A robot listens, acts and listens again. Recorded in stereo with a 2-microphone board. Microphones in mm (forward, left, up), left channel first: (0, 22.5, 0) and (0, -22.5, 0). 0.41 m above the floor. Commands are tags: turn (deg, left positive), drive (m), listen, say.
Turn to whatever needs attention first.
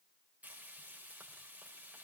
<listen/>
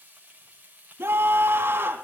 <turn deg="-65"/>
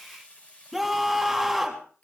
<say>Found it: a scream, straight ahead.</say>